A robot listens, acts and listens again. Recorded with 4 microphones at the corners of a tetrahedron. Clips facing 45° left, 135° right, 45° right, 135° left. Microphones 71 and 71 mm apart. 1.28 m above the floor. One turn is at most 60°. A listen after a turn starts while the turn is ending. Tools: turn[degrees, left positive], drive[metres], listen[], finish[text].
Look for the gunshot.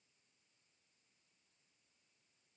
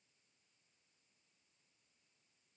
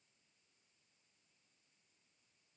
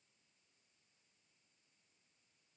Action: listen[]
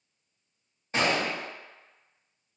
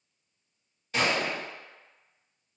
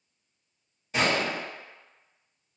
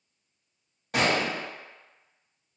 Thought: The gunshot: 105° left.
Action: turn[60]
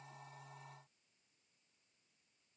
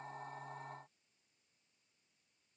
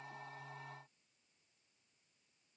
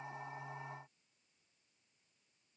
Thought: Nothing new. It was at 45° left.
Action: turn[45]
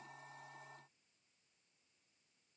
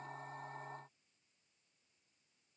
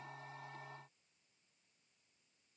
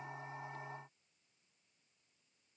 Action: finish[I heard a gunshot from this way, but can't make it out now.]